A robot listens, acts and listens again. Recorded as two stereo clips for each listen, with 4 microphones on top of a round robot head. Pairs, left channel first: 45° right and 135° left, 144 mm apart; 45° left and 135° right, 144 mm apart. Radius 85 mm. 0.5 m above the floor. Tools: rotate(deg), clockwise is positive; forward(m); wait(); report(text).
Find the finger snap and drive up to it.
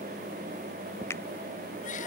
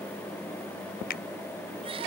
rotate(-30)
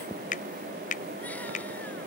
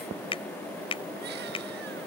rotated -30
rotate(10)
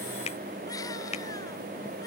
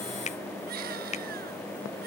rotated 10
forward(1.0)
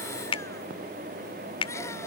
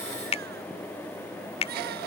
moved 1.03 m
forward(1.0)
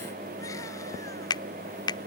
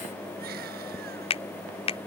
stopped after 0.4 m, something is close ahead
rotate(-10)
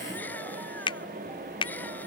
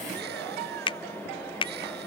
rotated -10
report("I am next to the finger snap.")